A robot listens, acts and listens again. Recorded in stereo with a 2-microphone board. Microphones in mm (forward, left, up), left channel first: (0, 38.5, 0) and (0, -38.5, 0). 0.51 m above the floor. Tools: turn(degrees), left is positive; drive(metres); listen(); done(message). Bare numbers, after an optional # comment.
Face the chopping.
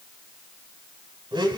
listen()
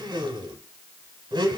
listen()
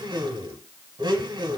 done("I can't make out chopping to turn to.")